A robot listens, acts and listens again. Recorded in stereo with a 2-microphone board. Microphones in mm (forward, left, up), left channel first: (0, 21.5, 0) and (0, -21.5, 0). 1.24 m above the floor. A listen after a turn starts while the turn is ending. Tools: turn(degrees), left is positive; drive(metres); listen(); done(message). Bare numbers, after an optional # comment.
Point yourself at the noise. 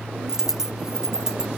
turn(-30)
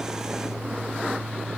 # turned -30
listen()
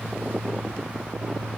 done("I heard a dropped coin, but can't make it out now. It was about 20° left or 140° right.")